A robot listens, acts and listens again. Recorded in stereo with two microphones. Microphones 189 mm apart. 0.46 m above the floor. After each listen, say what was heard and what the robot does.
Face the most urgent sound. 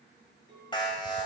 The alarm: about 25° left or 155° left. Turn 25° left.
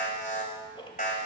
So it is at 130° left. Turn 130° left.
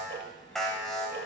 Found it: an alarm, straight ahead.